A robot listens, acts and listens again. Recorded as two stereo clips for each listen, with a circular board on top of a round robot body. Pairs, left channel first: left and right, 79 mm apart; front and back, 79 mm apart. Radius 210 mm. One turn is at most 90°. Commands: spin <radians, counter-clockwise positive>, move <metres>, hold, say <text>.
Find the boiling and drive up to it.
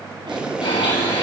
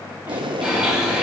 spin -1.57
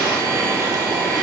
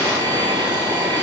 spin -1.40
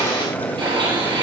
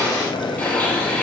spin 0.35
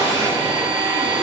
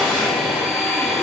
hold
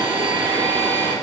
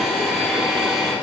hold
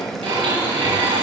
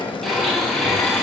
move 1.0
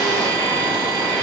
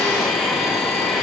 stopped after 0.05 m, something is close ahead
hold
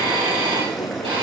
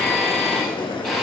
say Blocked. The boiling is further on, straight ahead.